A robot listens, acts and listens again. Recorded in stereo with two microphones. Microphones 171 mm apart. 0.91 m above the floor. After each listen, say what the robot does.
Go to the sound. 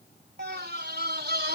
Turn 90° right.
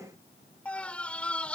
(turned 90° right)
Drive 1.0 m forward.
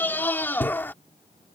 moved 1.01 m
Turn 10° left.
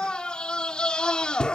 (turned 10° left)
Drive 1.0 m forward.
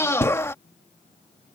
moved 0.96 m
Turn 15° left.
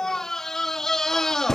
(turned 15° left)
Drive 1.0 m forward.
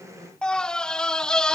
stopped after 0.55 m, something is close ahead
Arrived at the scream, straight ahead.